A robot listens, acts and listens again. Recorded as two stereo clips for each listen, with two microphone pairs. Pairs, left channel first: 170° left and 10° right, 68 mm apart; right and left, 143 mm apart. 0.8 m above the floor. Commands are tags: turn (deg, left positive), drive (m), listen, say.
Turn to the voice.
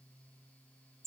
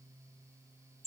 <listen/>
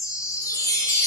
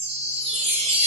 <listen/>
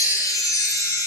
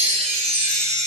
<say>I can't make out anyone speaking, only a chime.</say>